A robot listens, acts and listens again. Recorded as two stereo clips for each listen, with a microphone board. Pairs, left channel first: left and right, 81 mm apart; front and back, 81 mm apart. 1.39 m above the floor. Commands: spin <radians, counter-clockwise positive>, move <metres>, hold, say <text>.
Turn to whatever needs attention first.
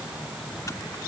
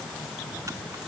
hold
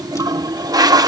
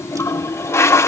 hold
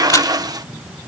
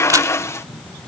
say I can't make out anything urgent to turn to.